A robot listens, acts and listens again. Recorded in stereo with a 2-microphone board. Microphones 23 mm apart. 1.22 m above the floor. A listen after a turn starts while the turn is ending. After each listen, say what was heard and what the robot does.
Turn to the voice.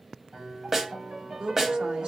The woman speaking: about 45° right or 135° right. Turn 45° right.
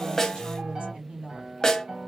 So it is at 70° right. Turn 70° right.
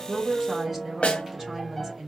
The woman speaking is now 10° right. Turn 10° right.
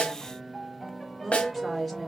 Facing the woman speaking.